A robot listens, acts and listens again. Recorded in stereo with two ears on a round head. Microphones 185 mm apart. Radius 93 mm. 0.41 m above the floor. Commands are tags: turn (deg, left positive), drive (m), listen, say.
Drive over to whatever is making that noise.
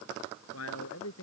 <turn deg="90"/>
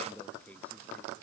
<drive m="1.0"/>
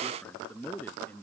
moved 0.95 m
<turn deg="10"/>
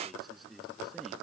<drive m="1.0"/>
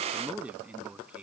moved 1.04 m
<drive m="1.0"/>
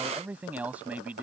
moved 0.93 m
<turn deg="-10"/>
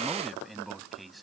<drive m="1.0"/>
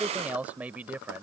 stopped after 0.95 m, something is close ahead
<turn deg="-10"/>
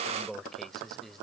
<say>I am next to the man speaking.</say>